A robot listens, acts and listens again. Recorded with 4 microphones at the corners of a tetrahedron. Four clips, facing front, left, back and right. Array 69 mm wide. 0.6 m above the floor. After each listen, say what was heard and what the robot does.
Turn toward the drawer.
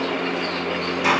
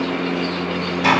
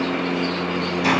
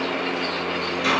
Keep listening.
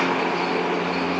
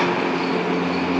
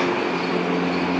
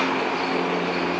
Keep listening.
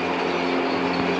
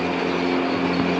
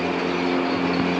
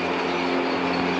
I can't make out a drawer to turn to.